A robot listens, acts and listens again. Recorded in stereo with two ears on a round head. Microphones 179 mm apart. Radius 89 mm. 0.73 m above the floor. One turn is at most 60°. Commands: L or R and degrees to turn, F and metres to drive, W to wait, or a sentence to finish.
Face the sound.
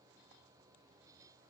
W
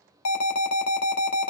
L60
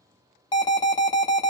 L20
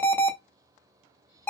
L10
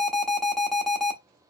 Found it: an alarm, straight ahead, under 1 m away.